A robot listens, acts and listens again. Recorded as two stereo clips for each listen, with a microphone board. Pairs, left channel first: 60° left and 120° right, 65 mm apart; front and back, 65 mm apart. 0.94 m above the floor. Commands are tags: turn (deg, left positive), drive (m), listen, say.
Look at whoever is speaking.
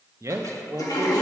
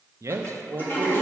<turn deg="-150"/>
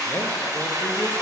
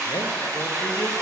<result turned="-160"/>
<turn deg="10"/>
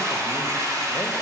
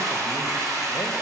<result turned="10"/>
<listen/>
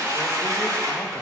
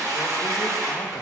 <say>I heard a man speaking from this way, but can't make it out now.</say>